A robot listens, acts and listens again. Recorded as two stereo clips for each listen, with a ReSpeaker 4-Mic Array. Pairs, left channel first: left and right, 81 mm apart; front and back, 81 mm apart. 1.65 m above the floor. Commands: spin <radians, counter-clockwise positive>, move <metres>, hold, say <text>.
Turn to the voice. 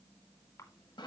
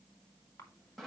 hold
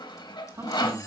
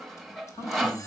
spin -0.70
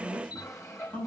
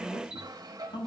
spin 0.17
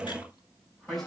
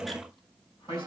say Facing the man speaking, over 4 m away.